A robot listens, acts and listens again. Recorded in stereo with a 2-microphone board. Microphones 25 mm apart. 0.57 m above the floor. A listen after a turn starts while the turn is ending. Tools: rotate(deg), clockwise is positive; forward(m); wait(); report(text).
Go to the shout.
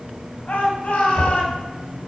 rotate(-50)
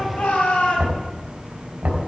rotate(-80)
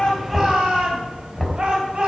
rotate(35)
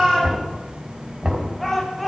forward(1.0)
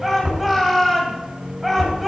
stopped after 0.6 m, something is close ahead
report("Blocked. The shout is further on, straight ahead.")